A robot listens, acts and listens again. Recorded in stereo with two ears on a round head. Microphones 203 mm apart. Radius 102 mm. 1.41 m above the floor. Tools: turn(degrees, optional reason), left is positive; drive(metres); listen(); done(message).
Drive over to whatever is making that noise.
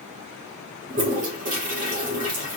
turn(degrees=-35, reason="The toilet flushing: about 35° right or 145° right.")
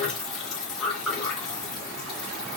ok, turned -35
drive(metres=1.0)
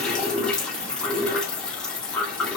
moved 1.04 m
drive(metres=1.0)
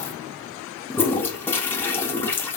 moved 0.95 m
turn(degrees=10, reason="The toilet flushing is now 10° left.")
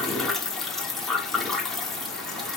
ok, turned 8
drive(metres=1.0)
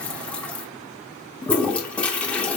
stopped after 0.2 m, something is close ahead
done("Arrived at the toilet flushing, straight ahead.")